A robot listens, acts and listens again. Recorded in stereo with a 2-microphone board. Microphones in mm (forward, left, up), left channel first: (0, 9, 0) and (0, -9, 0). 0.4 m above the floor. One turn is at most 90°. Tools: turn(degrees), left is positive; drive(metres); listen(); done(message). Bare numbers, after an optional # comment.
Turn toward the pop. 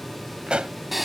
# The pop: about 70° right or 110° right.
turn(-70)
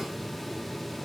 listen()
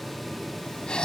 done("I heard a pop, but can't make it out now. It was about straight ahead or 40° right.")